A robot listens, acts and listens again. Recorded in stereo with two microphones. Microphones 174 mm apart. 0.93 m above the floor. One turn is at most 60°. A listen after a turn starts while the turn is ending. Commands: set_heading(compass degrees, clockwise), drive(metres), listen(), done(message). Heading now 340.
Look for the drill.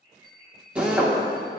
set_heading(10)
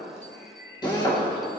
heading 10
set_heading(345)
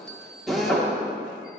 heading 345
done("Found it: a drill, straight ahead.")